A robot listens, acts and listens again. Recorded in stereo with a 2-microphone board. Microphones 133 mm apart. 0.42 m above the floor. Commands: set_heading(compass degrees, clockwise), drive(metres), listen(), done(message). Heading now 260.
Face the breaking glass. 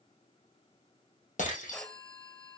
set_heading(185)
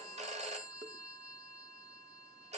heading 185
listen()
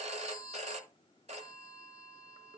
done("I heard breaking glass, but can't make it out now. It was about straight ahead or 30° left.")